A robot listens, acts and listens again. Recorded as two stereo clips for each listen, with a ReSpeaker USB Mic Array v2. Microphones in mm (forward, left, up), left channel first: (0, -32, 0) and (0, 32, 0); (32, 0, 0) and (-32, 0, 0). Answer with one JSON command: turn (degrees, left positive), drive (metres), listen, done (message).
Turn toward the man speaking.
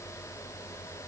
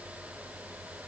{"listen": true}
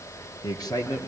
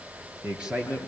{"turn": -105}
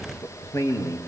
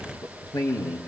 {"turn": -35}
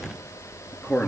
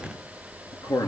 {"turn": -15}
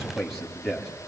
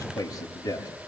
{"done": "Found it: a man speaking, straight ahead, over 4 m away."}